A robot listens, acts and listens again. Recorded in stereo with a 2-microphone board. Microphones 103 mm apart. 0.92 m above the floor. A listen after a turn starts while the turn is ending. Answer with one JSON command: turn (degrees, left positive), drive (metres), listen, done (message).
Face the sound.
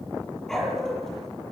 {"turn": 30}
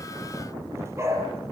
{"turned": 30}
{"turn": -25}
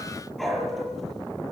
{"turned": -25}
{"done": "Facing the dog barking."}